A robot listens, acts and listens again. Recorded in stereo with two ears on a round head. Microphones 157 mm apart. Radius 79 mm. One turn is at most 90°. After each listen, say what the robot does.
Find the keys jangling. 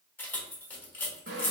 Turn 30° left.
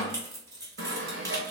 Turn 20° right.
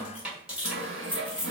Facing the keys jangling.